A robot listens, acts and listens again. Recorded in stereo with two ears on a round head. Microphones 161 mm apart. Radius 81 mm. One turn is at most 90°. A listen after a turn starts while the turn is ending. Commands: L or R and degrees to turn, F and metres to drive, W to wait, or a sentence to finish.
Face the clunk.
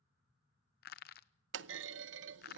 R90
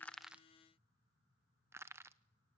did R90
I heard a clunk from this way, but can't make it out now.